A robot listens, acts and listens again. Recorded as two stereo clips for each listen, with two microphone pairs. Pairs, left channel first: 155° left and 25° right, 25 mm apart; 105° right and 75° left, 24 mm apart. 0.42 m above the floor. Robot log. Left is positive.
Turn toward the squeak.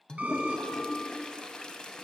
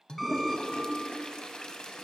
note: The squeak: 20° right.
cmd yaw -20
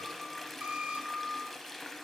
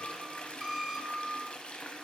end: Facing the squeak, under 1 m away.